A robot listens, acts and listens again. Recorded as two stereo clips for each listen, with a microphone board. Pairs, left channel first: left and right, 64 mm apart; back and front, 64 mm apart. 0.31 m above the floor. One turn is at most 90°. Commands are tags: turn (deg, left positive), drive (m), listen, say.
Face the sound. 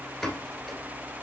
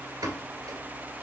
<say>Found it: a pop, straight ahead, 1 to 2 m away.</say>